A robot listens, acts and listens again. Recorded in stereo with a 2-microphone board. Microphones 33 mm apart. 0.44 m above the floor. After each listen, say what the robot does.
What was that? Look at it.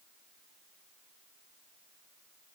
Keep listening.
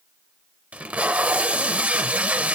Turn 45° right.
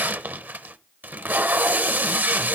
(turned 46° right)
Turn 85° right.
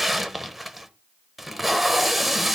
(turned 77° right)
Turn 10° right.
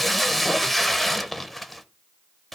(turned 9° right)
Found it: tape being pulled, straight ahead.